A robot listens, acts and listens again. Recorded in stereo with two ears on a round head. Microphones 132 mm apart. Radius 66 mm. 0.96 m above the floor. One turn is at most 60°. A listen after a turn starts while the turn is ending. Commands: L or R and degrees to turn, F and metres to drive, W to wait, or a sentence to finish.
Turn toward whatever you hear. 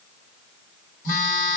L55
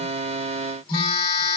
L40
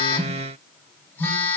L15
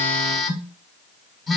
Facing the phone buzzing, under 1 m away.